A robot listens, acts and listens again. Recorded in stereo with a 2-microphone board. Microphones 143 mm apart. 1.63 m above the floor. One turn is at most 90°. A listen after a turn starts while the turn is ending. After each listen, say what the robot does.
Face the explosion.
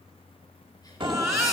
Turn 35° right.
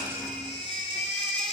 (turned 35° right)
Keep listening.
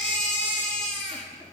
I heard an explosion, but can't make it out now. It was about straight ahead or 110° right.